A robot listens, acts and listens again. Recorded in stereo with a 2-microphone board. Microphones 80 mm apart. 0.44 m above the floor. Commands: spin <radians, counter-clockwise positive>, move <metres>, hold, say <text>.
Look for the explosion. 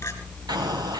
spin -1.05
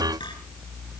hold
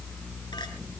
say I heard an explosion, but can't make it out now. It was about straight ahead or 60° right.